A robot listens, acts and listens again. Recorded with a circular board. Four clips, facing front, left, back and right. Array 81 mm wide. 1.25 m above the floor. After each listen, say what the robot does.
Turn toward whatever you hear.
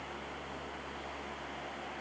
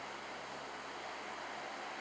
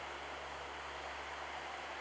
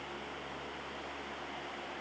Keep listening.
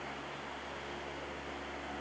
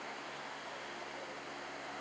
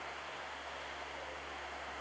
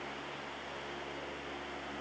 Keep listening.
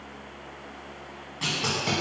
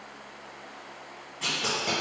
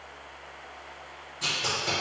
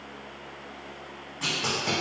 Turn 15° right.
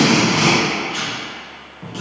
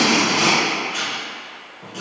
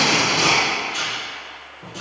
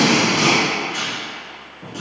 Facing the tape being pulled.